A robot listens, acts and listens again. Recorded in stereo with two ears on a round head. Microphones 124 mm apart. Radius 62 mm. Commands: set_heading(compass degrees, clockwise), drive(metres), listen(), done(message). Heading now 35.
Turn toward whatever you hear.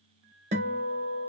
set_heading(85)
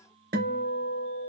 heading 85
set_heading(165)
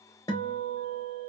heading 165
set_heading(135)
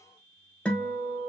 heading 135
set_heading(125)
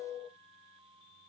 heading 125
done("Found it: a guitar, straight ahead.")